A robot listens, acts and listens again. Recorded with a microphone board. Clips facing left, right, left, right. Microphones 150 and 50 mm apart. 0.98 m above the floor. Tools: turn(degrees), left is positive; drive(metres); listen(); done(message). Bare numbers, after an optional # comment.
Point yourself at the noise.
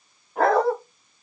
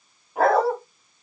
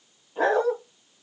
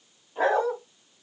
turn(-30)
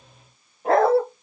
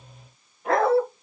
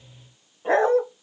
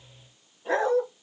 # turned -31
# So it is at 40° left.
turn(40)
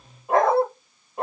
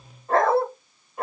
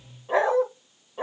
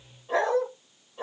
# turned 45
# The dog barking is now 25° left.
turn(25)
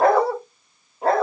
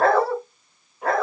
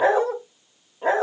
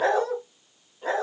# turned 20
# The dog barking is now 30° left.
turn(30)
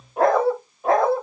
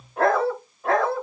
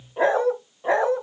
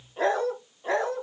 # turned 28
# The dog barking is now 15° left.
turn(15)
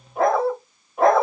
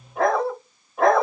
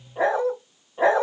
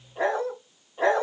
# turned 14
done("Found it: a dog barking, straight ahead, 1 to 2 m away.")